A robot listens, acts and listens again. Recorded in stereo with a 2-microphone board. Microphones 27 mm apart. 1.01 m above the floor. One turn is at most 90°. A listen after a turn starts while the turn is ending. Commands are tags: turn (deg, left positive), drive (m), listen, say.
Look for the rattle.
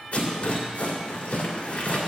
<turn deg="50"/>
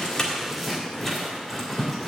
<say>Found it: a rattle, straight ahead, 2 to 4 m away.</say>